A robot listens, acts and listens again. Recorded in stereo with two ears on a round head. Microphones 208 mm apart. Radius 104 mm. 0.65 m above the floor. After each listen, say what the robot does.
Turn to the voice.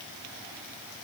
Keep listening.
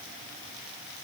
Keep listening.
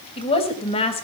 Turn 25° left.
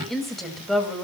Facing the woman speaking.